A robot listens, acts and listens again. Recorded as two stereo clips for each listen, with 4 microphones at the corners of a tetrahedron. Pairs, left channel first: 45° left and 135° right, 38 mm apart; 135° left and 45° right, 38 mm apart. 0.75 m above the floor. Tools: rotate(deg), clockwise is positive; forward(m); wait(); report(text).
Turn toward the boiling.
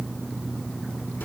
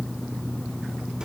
wait()
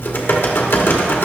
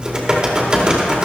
wait()
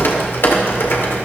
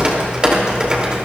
report("I can't make out boiling, only typing on a keyboard.")